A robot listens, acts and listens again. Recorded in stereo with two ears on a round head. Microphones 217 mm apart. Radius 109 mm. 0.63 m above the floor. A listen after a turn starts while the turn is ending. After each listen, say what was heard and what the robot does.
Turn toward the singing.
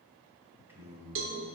Turn 30° right.
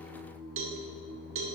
So it is at 140° right. Turn 140° right.
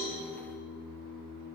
Facing the singing.